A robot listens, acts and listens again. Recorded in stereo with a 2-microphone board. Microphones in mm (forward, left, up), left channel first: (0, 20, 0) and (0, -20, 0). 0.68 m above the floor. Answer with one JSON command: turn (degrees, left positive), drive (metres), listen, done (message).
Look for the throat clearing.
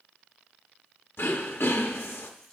{"turn": 90}
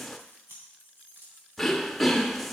{"done": "Facing the throat clearing, under 1 m away."}